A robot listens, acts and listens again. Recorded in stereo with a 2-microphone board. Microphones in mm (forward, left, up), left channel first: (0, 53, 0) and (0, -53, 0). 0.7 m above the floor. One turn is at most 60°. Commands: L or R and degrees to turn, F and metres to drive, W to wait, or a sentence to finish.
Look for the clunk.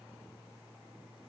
W
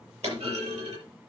R60
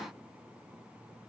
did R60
R30
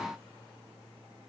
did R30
Facing where the clunk came from. I can't hear it now.